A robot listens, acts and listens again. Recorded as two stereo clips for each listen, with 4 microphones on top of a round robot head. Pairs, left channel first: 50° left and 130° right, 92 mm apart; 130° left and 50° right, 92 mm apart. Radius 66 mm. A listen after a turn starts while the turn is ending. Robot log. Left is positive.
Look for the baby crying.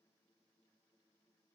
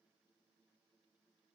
cmd idle
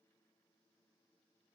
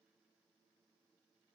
cmd idle
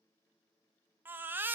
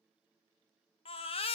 note: The baby crying: 160° left.
cmd yaw +160
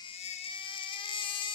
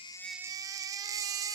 note: The baby crying is now 10° left.
cmd yaw +10
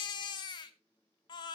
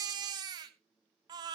end: Found it: a baby crying, straight ahead, under 1 m away.